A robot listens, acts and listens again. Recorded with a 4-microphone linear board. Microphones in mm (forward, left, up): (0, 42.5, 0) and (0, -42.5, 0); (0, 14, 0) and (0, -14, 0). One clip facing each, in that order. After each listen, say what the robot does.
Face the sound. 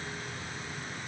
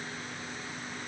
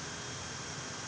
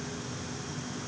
Keep listening.
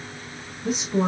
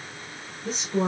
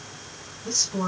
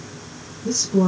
Turn 30° left.
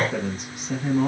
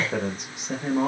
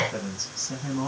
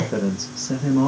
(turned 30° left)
Turn 40° right.
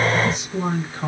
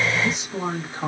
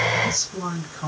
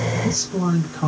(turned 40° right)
Turn 25° right.
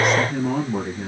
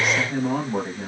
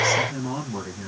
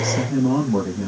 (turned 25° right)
Turn 10° right.
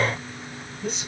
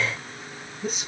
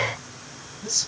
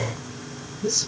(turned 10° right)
Facing the man speaking.